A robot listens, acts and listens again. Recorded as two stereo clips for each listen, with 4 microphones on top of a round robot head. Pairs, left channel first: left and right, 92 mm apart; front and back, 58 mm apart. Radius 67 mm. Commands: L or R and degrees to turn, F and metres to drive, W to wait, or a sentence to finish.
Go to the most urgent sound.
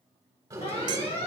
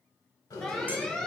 L80
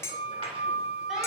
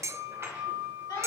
W
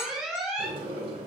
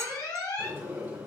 F1.0
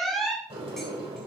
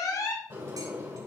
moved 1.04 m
F1.0
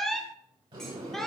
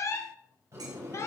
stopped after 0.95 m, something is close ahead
Arrived at the alarm, straight ahead.